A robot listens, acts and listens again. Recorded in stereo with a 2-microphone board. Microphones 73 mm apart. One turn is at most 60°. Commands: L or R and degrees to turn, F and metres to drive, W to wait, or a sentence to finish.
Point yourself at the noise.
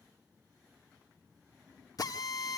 L60
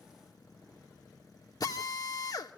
L60
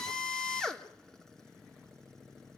Found it: a drill, straight ahead, 1 to 2 m away.